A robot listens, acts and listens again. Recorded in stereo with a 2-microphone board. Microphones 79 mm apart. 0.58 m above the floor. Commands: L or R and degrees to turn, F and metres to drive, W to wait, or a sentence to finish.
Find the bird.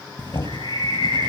L75
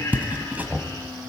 W
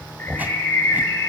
L30
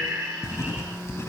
R25
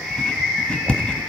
Facing the bird, over 4 m away.